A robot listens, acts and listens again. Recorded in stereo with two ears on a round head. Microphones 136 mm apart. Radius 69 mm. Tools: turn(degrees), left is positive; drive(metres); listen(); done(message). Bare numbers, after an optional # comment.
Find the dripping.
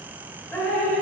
turn(30)
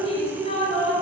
# So it is at 135° left.
turn(135)
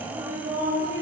# The dripping is now 20° right.
turn(-20)
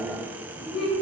done("Found it: dripping, straight ahead, 2 to 4 m away.")